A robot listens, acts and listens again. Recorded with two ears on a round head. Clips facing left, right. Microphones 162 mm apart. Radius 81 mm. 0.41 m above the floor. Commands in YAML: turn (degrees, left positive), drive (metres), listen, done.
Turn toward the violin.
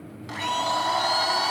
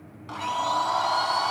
turn: 30
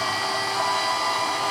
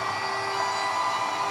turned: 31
listen: true
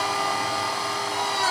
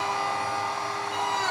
listen: true
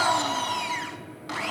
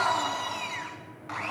done: "Found it: a violin, straight ahead, 2 to 4 m away."